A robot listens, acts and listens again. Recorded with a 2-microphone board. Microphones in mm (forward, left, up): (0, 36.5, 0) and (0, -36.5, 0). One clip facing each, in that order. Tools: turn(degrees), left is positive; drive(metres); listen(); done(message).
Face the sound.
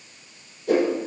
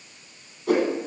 turn(degrees=-70)
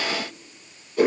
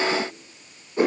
turn(degrees=-30)
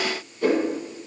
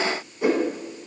turn(degrees=-20)
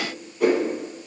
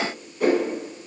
done("Facing the whoosh.")